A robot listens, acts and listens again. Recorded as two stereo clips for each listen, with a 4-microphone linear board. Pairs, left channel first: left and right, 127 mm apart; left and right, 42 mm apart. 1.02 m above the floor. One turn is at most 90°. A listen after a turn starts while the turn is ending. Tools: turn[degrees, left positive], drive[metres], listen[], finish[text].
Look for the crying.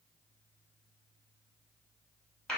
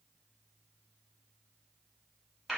Action: listen[]
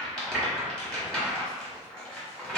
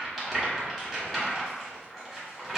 Action: listen[]
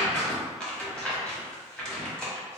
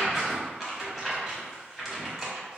Action: finish[I can't make out crying to turn to.]